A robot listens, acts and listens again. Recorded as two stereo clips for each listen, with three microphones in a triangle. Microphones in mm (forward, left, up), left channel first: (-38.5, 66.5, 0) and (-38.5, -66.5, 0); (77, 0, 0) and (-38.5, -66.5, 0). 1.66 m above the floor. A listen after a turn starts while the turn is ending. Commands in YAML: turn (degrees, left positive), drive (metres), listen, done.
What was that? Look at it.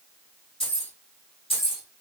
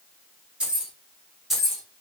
turn: 120
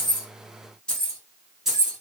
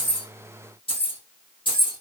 turn: -10
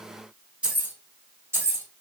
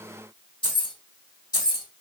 turn: -25
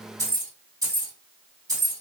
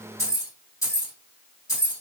turn: -35
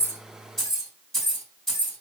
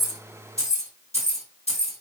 done: "Facing the keys jangling, 1 to 2 m away."